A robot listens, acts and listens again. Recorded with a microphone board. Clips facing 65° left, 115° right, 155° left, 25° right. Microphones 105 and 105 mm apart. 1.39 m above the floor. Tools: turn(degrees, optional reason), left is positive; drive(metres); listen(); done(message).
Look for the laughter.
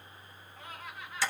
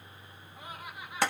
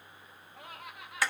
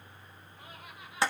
turn(degrees=170, reason="The laughter: 170° left.")
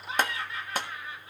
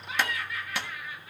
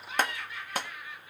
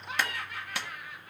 turn(degrees=10, reason="The laughter is now 10° left.")
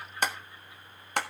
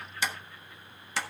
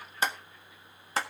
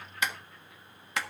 listen()
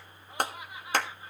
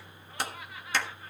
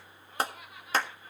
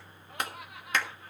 done("Found it: laughter, straight ahead.")